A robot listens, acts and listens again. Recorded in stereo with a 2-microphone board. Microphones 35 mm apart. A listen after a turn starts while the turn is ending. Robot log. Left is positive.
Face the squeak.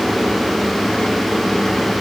cmd idle
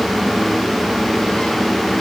cmd idle
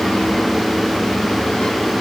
end: I can't make out a squeak to turn to.